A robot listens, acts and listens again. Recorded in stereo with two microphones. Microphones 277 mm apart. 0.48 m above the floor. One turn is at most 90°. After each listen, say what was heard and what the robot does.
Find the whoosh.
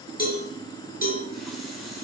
Keep listening.
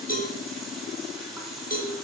Keep listening.
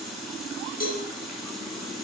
I can't make out a whoosh to turn to.